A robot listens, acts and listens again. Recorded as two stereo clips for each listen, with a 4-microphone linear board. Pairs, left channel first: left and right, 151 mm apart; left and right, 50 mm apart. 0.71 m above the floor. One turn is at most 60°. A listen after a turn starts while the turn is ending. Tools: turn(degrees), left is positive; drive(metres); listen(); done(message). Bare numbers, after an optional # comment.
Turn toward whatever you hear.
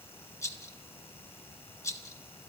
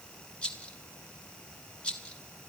# The rattle: about 20° left or 160° left.
turn(20)
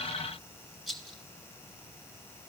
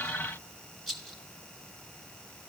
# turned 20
done("Found it: a rattle, straight ahead.")